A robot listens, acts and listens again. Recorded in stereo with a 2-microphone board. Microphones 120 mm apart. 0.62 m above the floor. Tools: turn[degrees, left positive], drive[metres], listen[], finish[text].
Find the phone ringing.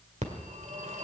Thought: The phone ringing: about 75° right or 105° right.
Action: turn[-75]
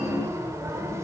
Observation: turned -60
Thought: So it is at 25° right.
Action: turn[-25]
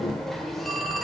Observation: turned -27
Action: finish[Facing the phone ringing, 1 to 2 m away.]